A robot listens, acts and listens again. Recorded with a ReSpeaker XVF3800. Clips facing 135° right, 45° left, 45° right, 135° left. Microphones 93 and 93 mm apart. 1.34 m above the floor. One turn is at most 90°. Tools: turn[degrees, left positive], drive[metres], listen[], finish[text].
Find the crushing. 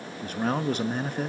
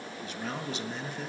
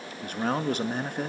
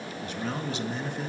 Action: listen[]
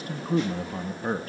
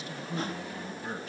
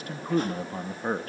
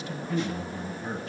Action: listen[]
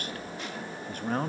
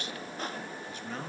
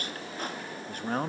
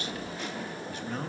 Action: finish[I can't make out crushing, only a man speaking.]